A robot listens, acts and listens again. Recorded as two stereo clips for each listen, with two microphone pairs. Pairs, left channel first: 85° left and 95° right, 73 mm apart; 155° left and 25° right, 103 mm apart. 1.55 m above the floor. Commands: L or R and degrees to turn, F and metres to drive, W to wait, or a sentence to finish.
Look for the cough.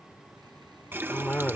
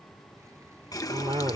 L10
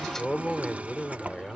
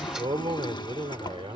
Facing the cough.